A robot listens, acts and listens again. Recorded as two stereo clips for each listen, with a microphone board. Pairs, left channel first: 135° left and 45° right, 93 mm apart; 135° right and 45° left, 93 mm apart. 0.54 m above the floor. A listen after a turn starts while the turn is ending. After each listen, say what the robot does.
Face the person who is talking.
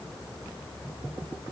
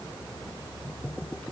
Keep listening.
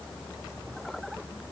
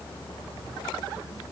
Keep listening.
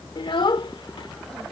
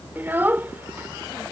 Turn 110° left.
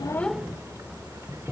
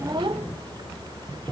Keep listening.
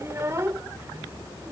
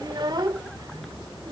Turn 10° left.
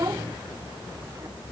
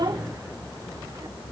Found it: a child speaking, straight ahead.